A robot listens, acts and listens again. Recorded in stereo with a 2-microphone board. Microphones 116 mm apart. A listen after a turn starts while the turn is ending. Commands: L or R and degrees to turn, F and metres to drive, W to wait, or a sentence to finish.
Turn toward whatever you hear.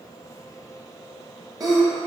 R30
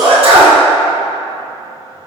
R115
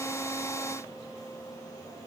Facing where the sneeze came from. I can't hear it now.